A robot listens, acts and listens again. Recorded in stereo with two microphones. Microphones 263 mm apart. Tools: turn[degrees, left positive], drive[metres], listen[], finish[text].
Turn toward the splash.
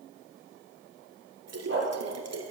Thought: The splash: about 75° right or 105° right.
Action: turn[-75]
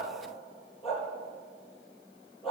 Action: listen[]
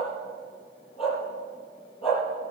Action: finish[I heard a splash, but can't make it out now. It was about straight ahead or 30° right.]